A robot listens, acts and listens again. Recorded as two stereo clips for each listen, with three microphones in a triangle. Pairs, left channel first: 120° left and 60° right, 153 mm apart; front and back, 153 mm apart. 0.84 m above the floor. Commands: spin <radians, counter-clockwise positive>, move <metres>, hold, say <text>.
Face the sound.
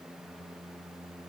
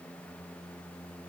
hold
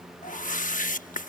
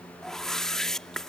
spin 1.48
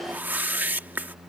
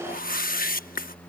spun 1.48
spin 0.35
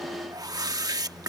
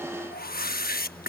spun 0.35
say Found it: a whoosh, straight ahead.